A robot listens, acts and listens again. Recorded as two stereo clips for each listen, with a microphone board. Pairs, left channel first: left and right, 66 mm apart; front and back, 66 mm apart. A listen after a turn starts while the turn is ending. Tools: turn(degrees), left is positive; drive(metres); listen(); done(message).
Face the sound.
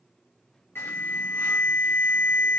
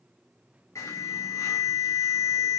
turn(degrees=35)
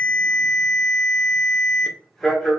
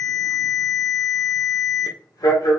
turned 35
done("Found it: an alarm, straight ahead.")